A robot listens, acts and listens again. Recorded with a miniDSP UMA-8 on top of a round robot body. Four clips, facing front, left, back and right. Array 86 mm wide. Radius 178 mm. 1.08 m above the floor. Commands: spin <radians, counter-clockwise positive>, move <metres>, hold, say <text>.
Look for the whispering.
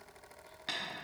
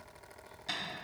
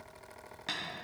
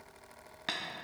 hold
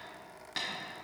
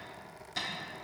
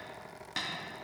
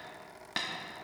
hold
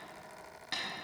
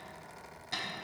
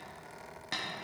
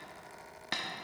say I can't make out whispering to turn to.